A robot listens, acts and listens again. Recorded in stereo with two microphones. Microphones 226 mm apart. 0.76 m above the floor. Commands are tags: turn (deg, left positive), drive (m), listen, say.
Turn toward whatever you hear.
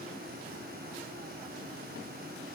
<listen/>
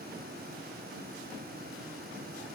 <listen/>
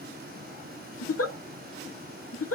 <turn deg="75"/>
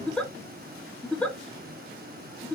<say>Found it: a giggle, straight ahead.</say>